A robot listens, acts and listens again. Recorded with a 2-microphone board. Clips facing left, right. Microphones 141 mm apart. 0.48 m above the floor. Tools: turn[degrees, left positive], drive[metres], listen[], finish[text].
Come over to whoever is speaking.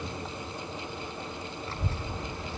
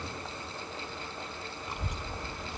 Thought: The child speaking: about 15° right or 165° right.
Action: turn[-15]
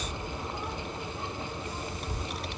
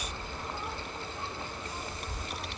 Action: drive[1.0]
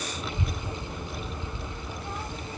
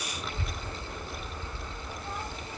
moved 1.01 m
Action: drive[1.0]
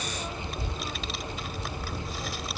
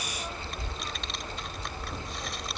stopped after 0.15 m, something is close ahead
Action: finish[I am next to the child speaking.]